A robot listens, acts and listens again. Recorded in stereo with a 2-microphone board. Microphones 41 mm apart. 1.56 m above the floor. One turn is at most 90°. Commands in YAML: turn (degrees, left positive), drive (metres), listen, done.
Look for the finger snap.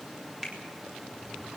turn: -30
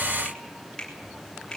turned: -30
turn: 20
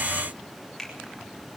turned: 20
done: "Facing the finger snap."